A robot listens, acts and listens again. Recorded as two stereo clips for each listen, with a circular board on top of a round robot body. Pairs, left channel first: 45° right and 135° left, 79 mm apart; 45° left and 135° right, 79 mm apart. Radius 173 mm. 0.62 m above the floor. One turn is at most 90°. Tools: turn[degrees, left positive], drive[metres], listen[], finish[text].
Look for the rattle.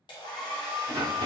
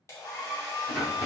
Thought: The rattle: 110° left.
Action: turn[90]
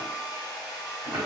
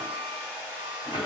Thought: The rattle is now 30° left.
Action: turn[30]
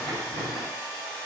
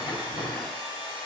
Action: finish[Found it: a rattle, straight ahead.]